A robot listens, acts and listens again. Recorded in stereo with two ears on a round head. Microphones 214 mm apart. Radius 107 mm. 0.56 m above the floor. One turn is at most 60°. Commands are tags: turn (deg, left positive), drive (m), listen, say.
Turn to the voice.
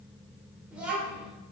<turn deg="-30"/>
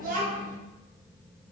<turn deg="-60"/>
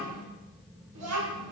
<turn deg="-60"/>
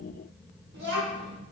<turn deg="-45"/>
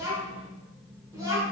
<turn deg="-15"/>
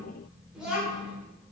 <say>Facing the child speaking, under 1 m away.</say>